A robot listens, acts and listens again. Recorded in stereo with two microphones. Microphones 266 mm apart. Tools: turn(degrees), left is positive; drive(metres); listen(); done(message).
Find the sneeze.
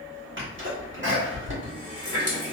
turn(degrees=-50)
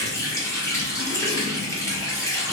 listen()
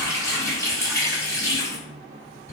done("I heard a sneeze, but can't make it out now. It was about straight ahead or 80° right.")